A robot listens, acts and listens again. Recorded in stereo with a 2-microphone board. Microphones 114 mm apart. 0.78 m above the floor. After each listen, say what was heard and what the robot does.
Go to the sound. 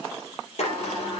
The sliding door: about 70° left or 110° left. Turn 70° left.
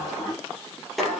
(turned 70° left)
Drive 1.0 m forward.
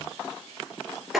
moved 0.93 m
Drive 1.0 m forward.
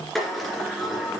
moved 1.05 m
Drive 1.0 m forward.
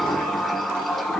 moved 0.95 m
Drive 1.0 m forward.
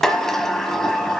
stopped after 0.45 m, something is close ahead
I am next to the sliding door.